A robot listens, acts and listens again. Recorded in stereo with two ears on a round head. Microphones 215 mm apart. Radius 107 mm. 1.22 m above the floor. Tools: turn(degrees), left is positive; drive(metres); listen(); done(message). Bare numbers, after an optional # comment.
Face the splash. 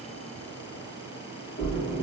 # The splash: about 50° left or 130° left.
turn(50)
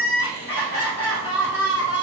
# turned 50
listen()
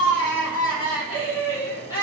done("I heard a splash, but can't make it out now. It was about straight ahead or 80° left.")